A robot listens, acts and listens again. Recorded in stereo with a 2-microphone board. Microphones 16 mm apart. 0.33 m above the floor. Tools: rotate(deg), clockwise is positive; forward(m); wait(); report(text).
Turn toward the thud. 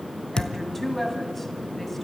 rotate(-55)
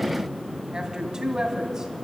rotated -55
wait()
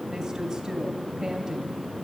report("I heard a thud, but can't make it out now. It was about straight ahead or 70° left.")